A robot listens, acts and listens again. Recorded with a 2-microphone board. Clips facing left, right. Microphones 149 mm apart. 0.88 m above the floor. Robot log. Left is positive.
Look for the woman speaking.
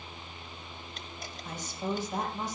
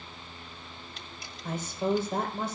note: The woman speaking: about 55° right or 125° right.
cmd yaw -55
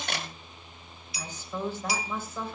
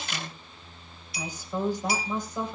note: So it is at 15° right.
cmd yaw -15
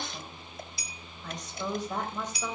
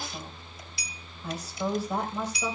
note: The woman speaking is now 10° right.
cmd yaw -10
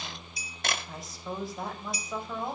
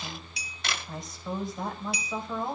end: Found it: a woman speaking, straight ahead.